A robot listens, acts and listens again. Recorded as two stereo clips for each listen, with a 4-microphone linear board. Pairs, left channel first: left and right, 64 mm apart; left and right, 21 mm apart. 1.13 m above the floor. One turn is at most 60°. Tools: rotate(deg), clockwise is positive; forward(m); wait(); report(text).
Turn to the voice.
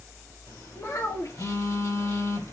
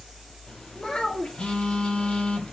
rotate(-60)
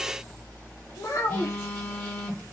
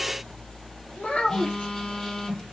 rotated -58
rotate(-60)
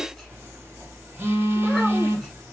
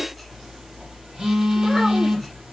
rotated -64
wait()
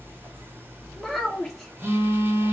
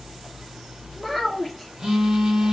report("Facing the child speaking.")